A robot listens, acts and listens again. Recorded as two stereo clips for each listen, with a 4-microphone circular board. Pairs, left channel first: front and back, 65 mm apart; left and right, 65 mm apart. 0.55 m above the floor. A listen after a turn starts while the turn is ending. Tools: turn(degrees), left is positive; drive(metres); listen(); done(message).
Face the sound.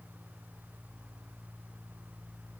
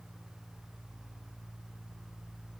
listen()
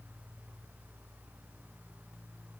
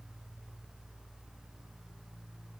listen()
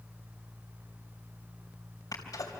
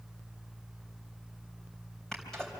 done("Found it: a sneeze, straight ahead.")